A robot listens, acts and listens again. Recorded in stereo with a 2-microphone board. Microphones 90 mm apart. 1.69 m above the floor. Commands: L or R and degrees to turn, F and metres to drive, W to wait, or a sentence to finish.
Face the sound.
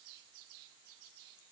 W
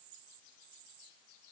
W
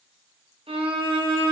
R90
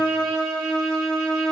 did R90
Found it: a violin, straight ahead, 1 to 2 m away.